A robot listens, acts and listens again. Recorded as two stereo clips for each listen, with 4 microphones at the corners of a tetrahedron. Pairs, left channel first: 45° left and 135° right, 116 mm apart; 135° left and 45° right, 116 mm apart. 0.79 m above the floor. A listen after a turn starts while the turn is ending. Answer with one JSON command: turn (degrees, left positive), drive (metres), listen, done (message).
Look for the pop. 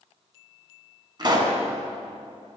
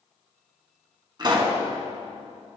{"turn": -90}
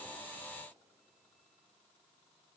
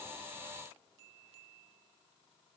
{"done": "I heard a pop from this way, but can't make it out now."}